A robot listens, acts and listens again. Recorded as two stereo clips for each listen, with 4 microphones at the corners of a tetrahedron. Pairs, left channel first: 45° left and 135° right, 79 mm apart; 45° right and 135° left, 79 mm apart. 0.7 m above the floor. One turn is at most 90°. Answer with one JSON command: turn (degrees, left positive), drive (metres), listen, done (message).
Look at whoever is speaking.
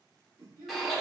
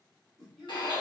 {"turn": -90}
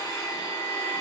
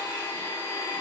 {"turn": -35}
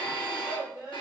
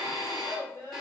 {"done": "Found it: a child speaking, straight ahead."}